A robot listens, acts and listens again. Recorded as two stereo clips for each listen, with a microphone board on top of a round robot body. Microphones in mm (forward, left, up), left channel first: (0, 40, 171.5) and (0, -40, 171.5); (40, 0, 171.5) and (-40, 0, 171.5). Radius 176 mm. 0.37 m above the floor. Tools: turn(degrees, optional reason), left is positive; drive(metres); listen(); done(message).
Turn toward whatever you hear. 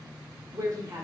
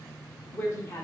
turn(degrees=-45, reason="The woman speaking: 45° right.")
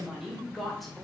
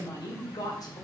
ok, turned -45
done("Found it: a woman speaking, straight ahead, 2 to 4 m away.")